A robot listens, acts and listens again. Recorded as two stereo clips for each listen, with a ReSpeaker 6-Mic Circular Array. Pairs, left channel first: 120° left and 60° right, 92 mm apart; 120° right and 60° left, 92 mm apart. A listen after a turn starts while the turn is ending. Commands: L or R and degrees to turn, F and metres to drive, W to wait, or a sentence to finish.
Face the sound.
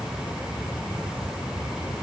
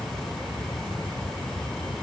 W
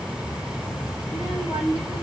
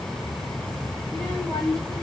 L115
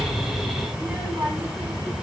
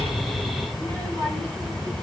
Found it: a child speaking, straight ahead, over 4 m away.